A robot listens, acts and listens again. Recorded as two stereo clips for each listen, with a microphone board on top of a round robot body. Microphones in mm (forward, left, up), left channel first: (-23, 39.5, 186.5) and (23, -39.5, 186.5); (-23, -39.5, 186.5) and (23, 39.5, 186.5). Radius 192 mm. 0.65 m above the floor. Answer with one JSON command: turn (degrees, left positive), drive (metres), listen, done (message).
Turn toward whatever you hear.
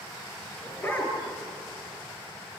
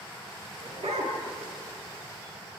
{"turn": 50}
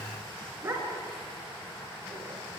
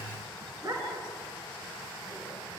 {"done": "Found it: a dog barking, straight ahead, over 4 m away."}